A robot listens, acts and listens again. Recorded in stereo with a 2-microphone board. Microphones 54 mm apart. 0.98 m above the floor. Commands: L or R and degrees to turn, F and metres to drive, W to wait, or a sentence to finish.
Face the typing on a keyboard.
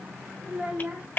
L30
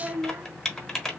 L10
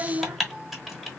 Facing the typing on a keyboard.